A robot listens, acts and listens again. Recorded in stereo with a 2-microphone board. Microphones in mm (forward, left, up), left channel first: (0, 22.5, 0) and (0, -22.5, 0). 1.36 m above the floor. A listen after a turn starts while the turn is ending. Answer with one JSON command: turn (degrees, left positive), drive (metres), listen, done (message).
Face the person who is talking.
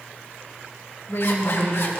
{"turn": 70}
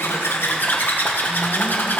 {"listen": true}
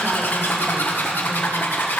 {"listen": true}
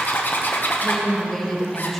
{"done": "Facing the woman speaking."}